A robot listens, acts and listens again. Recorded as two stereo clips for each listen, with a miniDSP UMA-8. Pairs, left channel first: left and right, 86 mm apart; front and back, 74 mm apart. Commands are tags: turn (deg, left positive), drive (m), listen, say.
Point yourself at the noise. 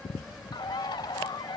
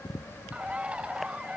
<turn deg="110"/>
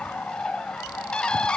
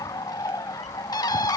<turn deg="10"/>
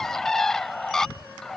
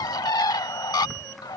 <say>Found it: a bird, straight ahead.</say>